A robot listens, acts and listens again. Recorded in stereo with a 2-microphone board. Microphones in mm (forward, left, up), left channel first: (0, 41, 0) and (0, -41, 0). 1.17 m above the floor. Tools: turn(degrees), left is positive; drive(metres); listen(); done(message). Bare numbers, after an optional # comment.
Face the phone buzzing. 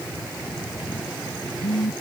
# The phone buzzing: about 55° left or 125° left.
turn(55)
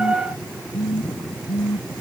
# So it is at 65° left.
turn(65)
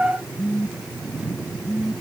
# The phone buzzing is now 20° right.
turn(-20)
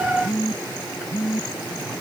done("Facing the phone buzzing.")